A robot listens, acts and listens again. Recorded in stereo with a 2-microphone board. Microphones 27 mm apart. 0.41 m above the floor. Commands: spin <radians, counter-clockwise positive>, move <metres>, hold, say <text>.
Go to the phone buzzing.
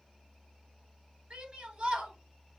hold
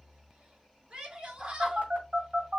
spin -1.13
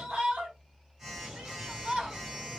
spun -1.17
spin -0.26
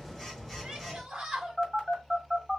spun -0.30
move 1.0
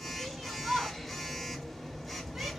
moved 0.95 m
move 1.0
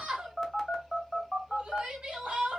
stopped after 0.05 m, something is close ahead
say I am next to the phone buzzing.